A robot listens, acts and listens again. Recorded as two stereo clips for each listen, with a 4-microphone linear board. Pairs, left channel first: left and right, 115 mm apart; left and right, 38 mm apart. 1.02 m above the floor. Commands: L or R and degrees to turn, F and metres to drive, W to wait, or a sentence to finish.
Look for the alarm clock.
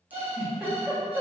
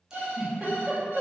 R50
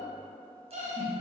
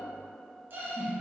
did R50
R80
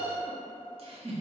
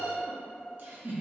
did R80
R15
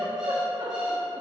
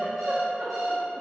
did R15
Facing the alarm clock, under 1 m away.